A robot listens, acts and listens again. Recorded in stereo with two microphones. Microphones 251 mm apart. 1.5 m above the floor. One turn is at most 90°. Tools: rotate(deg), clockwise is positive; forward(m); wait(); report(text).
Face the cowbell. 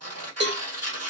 rotate(45)
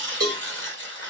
rotate(90)
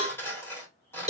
rotate(30)
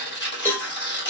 rotate(-10)
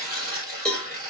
report("Found it: a cowbell, straight ahead, 1 to 2 m away.")